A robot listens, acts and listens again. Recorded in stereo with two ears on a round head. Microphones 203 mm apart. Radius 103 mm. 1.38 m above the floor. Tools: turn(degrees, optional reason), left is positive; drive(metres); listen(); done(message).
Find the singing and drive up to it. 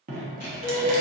turn(degrees=50, reason="The singing: about 50° left or 130° left.")
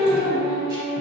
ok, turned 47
turn(degrees=75, reason="So it is at 75° left.")
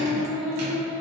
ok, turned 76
drive(metres=1.0)
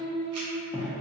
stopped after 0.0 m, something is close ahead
done("Something is in my way. I am facing the singing but have not reached it.")